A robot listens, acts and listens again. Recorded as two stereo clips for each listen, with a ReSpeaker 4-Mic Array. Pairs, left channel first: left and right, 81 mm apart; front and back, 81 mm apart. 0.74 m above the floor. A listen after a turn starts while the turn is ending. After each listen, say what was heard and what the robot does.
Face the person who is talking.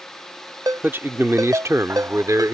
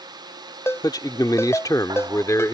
The man speaking: 50° right. Turn 50° right.
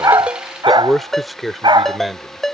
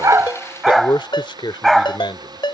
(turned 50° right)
Found it: a man speaking, straight ahead.